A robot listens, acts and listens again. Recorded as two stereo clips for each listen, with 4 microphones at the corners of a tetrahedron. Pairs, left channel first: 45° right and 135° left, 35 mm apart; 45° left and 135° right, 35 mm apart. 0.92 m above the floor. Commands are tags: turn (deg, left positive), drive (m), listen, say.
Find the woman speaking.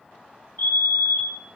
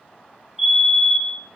<listen/>
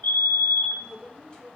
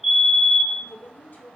<turn deg="25"/>
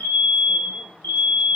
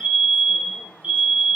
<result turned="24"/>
<listen/>
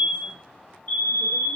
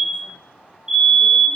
<listen/>
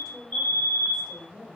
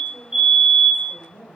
<turn deg="40"/>
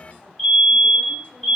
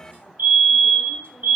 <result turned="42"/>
<listen/>
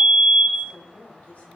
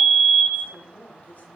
<say>Found it: a woman speaking, straight ahead.</say>